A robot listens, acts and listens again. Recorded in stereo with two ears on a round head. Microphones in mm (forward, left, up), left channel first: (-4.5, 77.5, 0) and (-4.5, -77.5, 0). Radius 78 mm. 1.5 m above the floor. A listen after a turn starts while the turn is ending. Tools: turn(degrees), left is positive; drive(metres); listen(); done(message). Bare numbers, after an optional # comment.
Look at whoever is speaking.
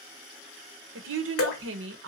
# The woman speaking: about 75° right or 105° right.
turn(-75)
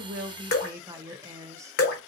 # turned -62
# So it is at 20° right.
turn(-20)
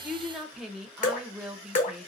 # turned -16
done("Facing the woman speaking, under 1 m away.")